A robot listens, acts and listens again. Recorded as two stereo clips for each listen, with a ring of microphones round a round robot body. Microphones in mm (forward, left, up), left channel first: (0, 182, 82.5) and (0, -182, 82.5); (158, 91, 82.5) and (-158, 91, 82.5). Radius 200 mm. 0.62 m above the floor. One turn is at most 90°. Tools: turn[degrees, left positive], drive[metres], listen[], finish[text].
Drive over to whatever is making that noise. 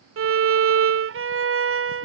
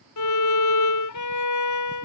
Thought: The violin: 35° right.
Action: turn[-35]
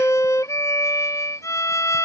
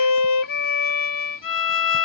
Thought: The violin is now 10° left.
Action: turn[10]
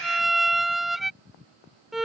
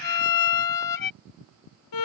Action: drive[1.0]
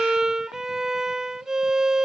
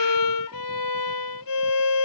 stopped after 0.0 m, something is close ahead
Action: finish[Something is in my way. I am facing the violin but have not reached it.]